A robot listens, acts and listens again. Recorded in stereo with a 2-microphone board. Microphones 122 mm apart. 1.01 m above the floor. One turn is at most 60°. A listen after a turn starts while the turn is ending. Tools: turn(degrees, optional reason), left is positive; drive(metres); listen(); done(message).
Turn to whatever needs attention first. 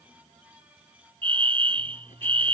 turn(degrees=-45, reason="The fire alarm: about 45° right or 135° right.")
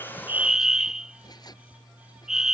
done("Found it: a fire alarm, straight ahead.")